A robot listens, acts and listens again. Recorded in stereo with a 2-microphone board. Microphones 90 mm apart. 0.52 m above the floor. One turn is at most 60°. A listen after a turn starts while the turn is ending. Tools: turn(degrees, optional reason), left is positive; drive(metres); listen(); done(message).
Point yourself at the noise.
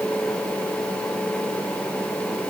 listen()
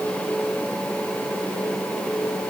listen()
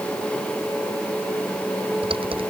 turn(degrees=-60)
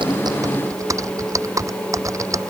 turn(degrees=-35, reason="So it is at 35° right.")
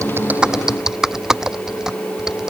done("Found it: typing on a keyboard, straight ahead.")